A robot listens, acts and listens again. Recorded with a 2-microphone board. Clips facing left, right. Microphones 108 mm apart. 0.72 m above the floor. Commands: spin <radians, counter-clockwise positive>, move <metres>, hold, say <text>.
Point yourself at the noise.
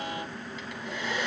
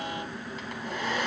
spin -0.79
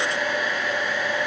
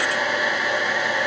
spin -1.57
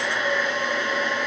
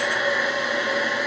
say Facing the hair dryer, 2 to 4 m away.